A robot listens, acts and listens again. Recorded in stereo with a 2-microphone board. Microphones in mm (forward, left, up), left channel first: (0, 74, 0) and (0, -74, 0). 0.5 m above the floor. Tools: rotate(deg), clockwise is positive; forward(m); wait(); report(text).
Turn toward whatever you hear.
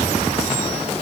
wait()
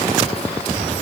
wait()
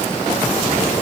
report("I can't make out anything.")